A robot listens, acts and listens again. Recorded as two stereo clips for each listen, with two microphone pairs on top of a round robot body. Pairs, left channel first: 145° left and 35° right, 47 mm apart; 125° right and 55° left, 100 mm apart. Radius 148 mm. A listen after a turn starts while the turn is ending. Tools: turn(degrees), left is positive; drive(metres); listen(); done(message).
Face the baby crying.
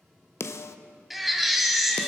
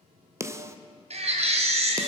turn(degrees=50)
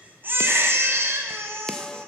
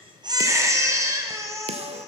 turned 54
done("Facing the baby crying.")